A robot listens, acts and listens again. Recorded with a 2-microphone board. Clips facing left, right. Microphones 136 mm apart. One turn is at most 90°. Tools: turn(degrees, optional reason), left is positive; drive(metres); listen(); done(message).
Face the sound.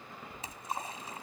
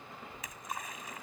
turn(degrees=30, reason="The splash: about 30° left or 150° left.")
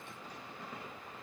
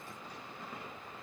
listen()
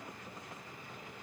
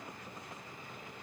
done("I heard a splash, but can't make it out now. It was about straight ahead or 120° left.")